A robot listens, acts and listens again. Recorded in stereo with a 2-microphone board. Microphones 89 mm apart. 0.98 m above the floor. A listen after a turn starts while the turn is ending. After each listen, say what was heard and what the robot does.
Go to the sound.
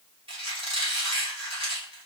Turn 90° right.
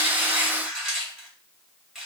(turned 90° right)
Drive 1.0 m forward.
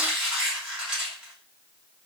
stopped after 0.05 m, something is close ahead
The squeak is now 10° right. Turn 10° right.
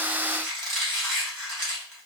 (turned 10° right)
Blocked. The squeak is further on, straight ahead.